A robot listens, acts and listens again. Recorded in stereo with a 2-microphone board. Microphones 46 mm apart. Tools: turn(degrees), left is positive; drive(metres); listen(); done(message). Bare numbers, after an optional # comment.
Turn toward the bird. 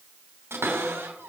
listen()
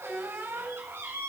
listen()
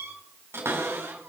done("I can't make out a bird to turn to.")